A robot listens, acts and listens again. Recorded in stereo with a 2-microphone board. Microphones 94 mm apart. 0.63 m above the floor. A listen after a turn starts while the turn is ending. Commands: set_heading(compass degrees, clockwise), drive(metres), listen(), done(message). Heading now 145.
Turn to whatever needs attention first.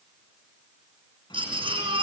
set_heading(215)
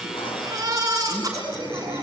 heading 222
set_heading(257)
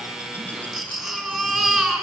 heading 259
done("Facing the baby crying, over 4 m away.")